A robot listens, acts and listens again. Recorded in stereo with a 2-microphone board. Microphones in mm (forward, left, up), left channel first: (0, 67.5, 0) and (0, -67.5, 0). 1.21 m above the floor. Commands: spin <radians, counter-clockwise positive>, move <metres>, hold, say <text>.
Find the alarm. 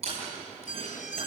spin 1.22
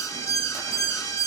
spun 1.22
spin 0.44
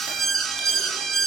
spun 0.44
say Found it: an alarm, straight ahead.